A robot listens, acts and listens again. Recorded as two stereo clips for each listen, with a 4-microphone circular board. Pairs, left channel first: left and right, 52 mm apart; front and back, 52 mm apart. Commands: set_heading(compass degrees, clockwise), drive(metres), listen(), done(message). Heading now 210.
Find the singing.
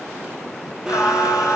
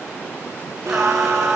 set_heading(115)
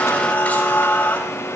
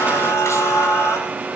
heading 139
set_heading(114)
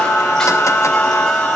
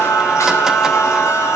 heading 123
set_heading(108)
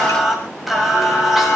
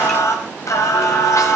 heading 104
done("Found it: singing, straight ahead, over 4 m away.")